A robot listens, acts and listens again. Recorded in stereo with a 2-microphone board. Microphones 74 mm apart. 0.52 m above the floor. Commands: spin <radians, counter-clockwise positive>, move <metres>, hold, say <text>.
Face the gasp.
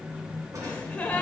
spin 0.35
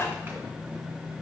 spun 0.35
spin 2.44
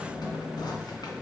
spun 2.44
say Facing where the gasp came from. I can't hear it now.